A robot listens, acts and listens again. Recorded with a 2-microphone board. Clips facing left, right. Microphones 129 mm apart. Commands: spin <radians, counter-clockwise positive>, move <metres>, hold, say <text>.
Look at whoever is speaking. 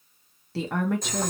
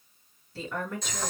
spin 1.13
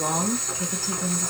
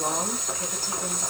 spin 0.26
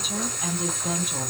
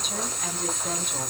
say Facing the woman speaking, under 1 m away.